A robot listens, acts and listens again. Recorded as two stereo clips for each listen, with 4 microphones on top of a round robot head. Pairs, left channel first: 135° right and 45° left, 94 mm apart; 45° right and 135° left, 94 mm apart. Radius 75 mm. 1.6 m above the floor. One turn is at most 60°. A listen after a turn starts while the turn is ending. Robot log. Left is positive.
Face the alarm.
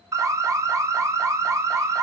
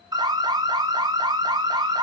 note: The alarm: 100° left.
cmd yaw +60
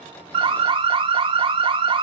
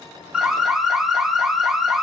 note: The alarm is now 50° left.
cmd yaw +50
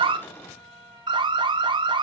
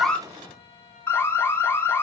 note: The alarm is now 15° left.
cmd yaw +15
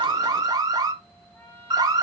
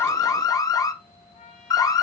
end: Facing the alarm.